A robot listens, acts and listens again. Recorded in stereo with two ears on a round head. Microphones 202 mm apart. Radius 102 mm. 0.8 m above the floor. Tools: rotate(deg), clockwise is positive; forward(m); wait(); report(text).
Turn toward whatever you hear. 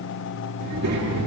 rotate(90)
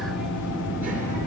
rotate(10)
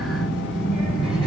report("Facing the child speaking, over 4 m away.")